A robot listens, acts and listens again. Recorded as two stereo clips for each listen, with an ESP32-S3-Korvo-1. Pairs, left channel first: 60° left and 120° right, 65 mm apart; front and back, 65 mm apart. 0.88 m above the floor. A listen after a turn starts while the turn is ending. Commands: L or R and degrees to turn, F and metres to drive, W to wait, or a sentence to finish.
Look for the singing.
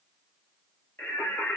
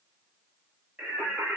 L110
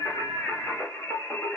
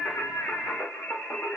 L40
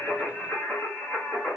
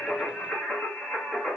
L70
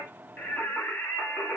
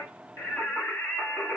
L10
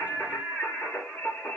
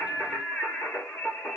Facing the singing, 1 to 2 m away.